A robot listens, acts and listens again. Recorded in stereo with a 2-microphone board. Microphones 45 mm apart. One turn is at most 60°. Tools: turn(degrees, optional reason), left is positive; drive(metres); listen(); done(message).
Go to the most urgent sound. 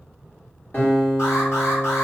turn(degrees=60, reason="The alarm: about 70° left or 110° left.")
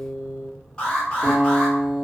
turn(degrees=15, reason="So it is at 15° left.")
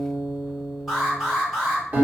drive(metres=1.0)
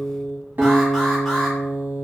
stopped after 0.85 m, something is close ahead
done("Arrived at the alarm, straight ahead.")